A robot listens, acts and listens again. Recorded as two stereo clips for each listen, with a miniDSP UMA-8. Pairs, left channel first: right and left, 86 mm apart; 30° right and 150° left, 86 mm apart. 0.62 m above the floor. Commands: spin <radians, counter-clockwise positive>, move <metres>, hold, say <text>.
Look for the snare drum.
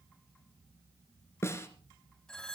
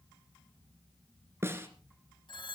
spin -2.62
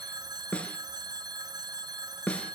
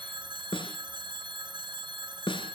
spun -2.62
spin -0.26
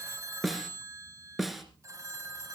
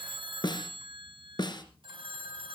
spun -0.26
say Found it: a snare drum, straight ahead, 2 to 4 m away.